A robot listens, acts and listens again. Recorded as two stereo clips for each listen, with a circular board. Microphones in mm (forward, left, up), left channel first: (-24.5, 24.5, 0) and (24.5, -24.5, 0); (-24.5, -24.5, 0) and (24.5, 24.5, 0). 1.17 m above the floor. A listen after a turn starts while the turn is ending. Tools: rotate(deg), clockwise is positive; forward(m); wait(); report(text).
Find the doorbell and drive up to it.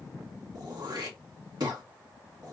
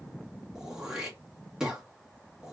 wait()
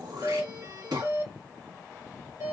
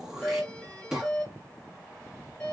rotate(70)
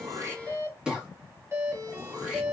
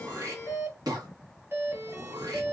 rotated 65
forward(1.0)
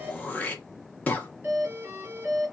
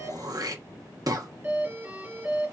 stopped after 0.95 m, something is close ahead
report("I am next to the doorbell.")